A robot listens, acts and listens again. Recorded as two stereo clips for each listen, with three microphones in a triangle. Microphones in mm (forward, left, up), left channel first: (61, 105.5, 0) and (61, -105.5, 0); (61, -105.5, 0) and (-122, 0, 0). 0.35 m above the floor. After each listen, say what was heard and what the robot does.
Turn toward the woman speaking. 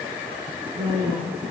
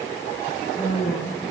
The woman speaking: 100° right. Turn 100° right.
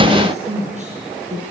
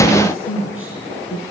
The woman speaking is now 40° right. Turn 40° right.
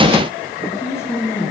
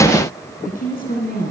The woman speaking is now 10° left. Turn 10° left.
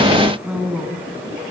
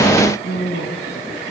Found it: a woman speaking, straight ahead.